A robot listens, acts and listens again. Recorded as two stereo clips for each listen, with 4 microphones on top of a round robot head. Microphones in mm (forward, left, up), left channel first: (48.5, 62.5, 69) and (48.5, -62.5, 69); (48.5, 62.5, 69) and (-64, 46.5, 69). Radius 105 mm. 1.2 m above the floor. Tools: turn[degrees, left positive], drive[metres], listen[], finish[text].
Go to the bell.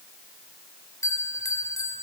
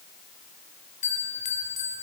Thought: The bell: 25° left.
Action: turn[25]
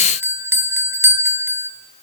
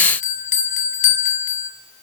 Thought: The bell is now 15° right.
Action: turn[-15]
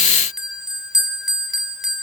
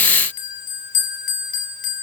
Action: drive[1.0]
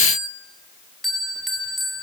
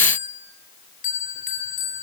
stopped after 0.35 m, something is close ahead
Action: finish[Something is in my way. I am facing the bell but have not reached it.]